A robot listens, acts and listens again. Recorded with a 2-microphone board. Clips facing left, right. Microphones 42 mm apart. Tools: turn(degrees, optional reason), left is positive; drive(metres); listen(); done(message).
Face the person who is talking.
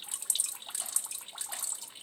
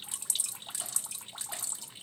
listen()
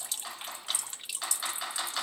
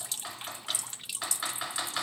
listen()
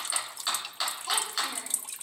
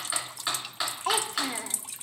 turn(degrees=-65, reason="The child speaking: about 65° right or 115° right.")
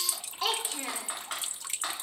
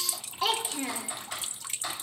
done("Found it: a child speaking, straight ahead.")